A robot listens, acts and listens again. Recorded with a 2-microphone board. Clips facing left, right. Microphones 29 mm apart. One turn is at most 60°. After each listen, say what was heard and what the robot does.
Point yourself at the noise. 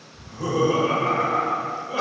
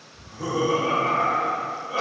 Turn 30° right.
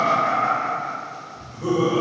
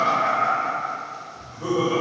So it is at 145° right. Turn 60° right.
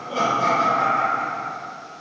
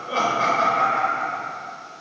The laughter is now 65° right. Turn 60° right.
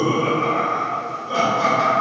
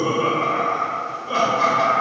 The laughter is now 25° right. Turn 25° right.
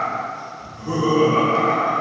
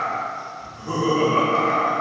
Found it: laughter, straight ahead, 1 to 2 m away.